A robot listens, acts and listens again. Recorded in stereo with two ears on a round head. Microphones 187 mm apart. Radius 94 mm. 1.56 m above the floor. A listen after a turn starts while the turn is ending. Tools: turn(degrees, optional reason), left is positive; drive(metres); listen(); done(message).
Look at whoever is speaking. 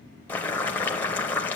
listen()
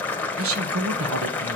turn(degrees=-90)
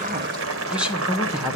done("Facing the woman speaking, 1 to 2 m away.")